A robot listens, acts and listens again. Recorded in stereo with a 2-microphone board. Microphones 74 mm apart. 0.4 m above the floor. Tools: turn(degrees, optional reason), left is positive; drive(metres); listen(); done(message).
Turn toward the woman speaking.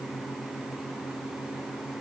listen()
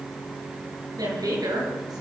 turn(degrees=-65, reason="The woman speaking: about 65° right or 115° right.")
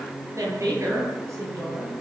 turn(degrees=-45, reason="So it is at 45° right.")
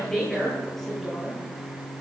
done("Found it: a woman speaking, straight ahead, over 4 m away.")